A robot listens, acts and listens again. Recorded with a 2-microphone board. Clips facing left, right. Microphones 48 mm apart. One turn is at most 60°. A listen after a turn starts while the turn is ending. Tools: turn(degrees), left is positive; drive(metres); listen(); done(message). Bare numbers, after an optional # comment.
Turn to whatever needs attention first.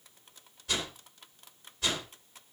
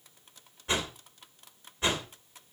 listen()
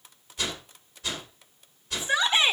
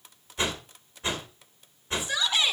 # The shout: about 30° left or 150° left.
turn(30)
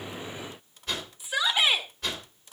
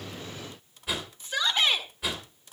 # So it is at 10° left.
turn(10)
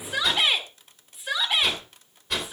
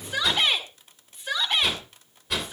done("Found it: a shout, straight ahead.")